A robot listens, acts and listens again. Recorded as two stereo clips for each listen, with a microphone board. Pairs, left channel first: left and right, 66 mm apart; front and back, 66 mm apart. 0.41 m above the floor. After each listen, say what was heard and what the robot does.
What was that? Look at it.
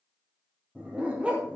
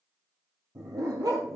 The dog barking: 165° right. Turn 165° right.
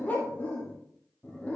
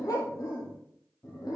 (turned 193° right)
The dog barking is now 20° left. Turn 20° left.
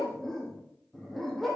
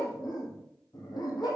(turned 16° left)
Facing the dog barking.